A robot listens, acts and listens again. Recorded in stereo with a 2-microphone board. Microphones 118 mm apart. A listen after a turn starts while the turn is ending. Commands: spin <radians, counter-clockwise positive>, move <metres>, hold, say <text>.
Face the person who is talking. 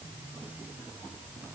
hold
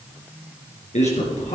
spin 1.31
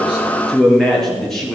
say Facing the man speaking, over 4 m away.